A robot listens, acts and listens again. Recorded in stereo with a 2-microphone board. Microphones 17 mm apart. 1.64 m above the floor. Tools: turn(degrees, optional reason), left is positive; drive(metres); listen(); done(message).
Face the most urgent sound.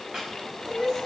turn(degrees=-35, reason="The crying: about 35° right or 145° right.")
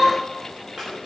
turn(degrees=-110, reason="So it is at 110° right.")
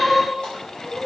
turn(degrees=-10, reason="The crying is now 10° right.")
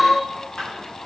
done("Facing the crying, over 4 m away.")